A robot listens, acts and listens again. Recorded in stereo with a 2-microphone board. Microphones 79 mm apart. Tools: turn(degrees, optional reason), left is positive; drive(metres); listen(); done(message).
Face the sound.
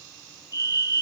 turn(degrees=45, reason="The fire alarm: about 45° left or 135° left.")
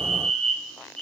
done("Found it: a fire alarm, straight ahead, over 4 m away.")